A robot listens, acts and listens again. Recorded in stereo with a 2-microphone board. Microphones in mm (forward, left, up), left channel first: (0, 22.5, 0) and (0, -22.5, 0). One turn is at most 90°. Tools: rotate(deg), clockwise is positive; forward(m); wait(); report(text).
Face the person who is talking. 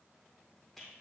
wait()
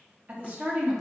rotate(35)
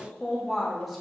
report("Facing the woman speaking.")